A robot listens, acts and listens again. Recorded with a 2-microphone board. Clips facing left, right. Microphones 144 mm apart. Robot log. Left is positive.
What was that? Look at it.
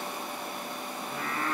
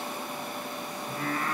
note: The singing: about 55° right or 125° right.
cmd yaw -55
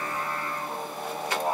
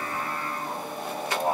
end: Facing the singing, 1 to 2 m away.